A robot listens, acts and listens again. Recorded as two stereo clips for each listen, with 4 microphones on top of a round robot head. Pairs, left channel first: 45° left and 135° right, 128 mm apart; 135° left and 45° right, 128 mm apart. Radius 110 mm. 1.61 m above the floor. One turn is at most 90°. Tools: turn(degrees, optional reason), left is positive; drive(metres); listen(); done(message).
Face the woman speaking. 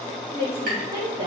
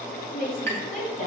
turn(degrees=90, reason="The woman speaking: 160° left.")
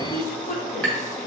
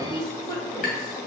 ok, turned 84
turn(degrees=70, reason="The woman speaking is now 70° left.")
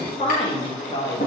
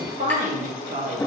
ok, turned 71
turn(degrees=-15, reason="The woman speaking is now 15° right.")
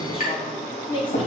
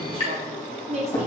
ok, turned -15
turn(degrees=-10, reason="The woman speaking is now 10° right.")
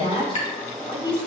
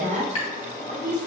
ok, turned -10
turn(degrees=-10, reason="The woman speaking is now 10° right.")
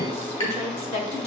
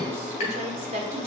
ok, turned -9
done("Found it: a woman speaking, straight ahead.")